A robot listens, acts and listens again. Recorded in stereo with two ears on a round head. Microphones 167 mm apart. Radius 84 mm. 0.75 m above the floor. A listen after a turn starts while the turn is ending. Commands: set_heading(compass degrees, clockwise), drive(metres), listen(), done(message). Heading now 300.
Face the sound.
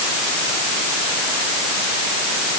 listen()
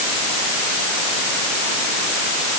listen()
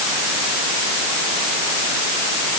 done("I can't make out anything.")